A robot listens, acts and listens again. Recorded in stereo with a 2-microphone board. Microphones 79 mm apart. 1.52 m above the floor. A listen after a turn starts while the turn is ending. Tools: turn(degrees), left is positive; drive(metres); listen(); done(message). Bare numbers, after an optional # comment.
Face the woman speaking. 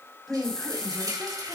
turn(30)
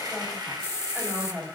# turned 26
# So it is at 25° right.
turn(-25)
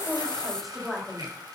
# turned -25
done("Facing the woman speaking.")